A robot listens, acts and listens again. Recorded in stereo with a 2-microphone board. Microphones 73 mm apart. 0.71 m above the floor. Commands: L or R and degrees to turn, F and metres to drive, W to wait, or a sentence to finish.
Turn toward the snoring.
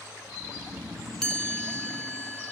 R25
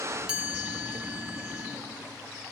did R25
W
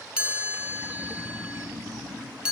Facing the snoring, over 4 m away.